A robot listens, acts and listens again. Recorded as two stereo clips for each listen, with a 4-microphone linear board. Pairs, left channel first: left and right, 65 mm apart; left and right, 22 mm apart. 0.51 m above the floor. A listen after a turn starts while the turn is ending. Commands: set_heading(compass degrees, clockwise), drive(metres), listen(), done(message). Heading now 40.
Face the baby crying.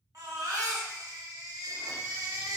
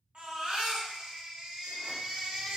set_heading(100)
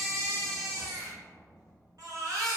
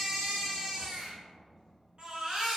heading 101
set_heading(156)
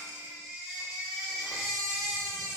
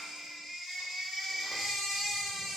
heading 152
done("Facing the baby crying, 1 to 2 m away.")